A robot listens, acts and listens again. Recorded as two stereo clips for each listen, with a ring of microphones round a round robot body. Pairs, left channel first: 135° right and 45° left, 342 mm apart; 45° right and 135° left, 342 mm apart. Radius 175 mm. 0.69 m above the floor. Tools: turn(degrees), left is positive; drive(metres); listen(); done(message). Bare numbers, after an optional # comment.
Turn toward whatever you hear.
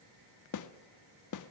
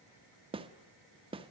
# The snare drum: 155° right.
turn(-155)
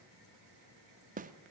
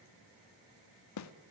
# The snare drum is now 20° right.
turn(-20)
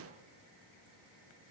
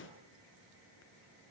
done("Facing the snare drum.")